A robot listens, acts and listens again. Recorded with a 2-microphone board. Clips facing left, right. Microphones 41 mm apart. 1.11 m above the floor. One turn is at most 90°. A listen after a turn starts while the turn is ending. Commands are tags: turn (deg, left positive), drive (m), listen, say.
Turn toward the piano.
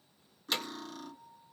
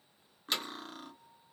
<turn deg="20"/>
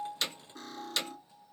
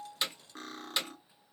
<listen/>
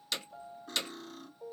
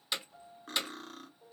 <turn deg="90"/>
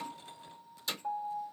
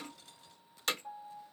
<turn deg="50"/>
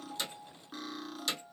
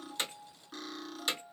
<say>Facing the piano, under 1 m away.</say>